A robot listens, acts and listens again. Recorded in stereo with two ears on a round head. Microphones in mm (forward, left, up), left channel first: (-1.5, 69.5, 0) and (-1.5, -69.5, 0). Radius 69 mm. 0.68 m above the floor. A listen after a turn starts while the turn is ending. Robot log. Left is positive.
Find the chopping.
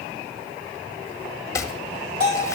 note: The chopping: about 20° left or 160° left.
cmd yaw +20
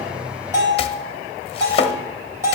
note: So it is at 140° left.
cmd yaw +140
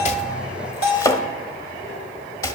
note: The chopping is now 20° left.
cmd yaw +20
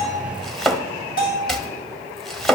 end: Facing the chopping, under 1 m away.